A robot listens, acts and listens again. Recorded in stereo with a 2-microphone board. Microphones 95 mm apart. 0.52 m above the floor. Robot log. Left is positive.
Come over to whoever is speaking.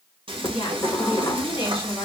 note: The woman speaking: about 75° left or 105° left.
cmd yaw +75
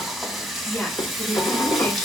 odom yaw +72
note: So it is at 10° left.
cmd yaw +10
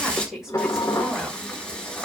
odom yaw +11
cmd fwd 1.0
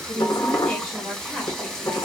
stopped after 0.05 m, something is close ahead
end: Blocked. The woman speaking is further on, straight ahead.